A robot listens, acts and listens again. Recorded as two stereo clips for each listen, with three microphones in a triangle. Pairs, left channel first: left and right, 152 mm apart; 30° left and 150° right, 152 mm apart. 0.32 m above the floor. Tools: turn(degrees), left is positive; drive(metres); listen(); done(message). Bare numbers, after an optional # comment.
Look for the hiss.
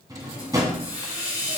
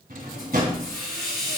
# The hiss: 25° left.
turn(25)
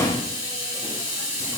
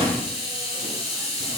# The hiss is now 25° right.
turn(-25)
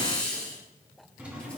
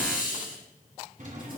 done("Found it: a hiss, straight ahead, 2 to 4 m away.")